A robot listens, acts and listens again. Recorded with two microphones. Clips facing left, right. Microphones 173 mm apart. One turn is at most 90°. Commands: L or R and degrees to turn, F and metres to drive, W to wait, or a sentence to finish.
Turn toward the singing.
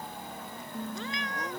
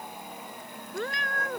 L25
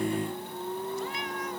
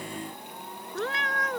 L90
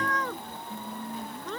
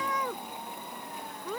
L55
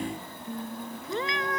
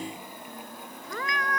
L25
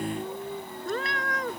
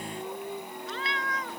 Facing the singing.